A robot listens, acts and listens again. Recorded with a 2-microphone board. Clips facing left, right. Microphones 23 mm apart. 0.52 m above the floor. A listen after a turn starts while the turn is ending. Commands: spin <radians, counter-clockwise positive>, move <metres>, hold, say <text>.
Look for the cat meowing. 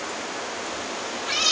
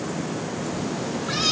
spin 1.22
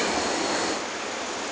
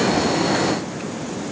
hold
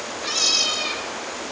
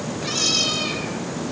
say Found it: a cat meowing, straight ahead.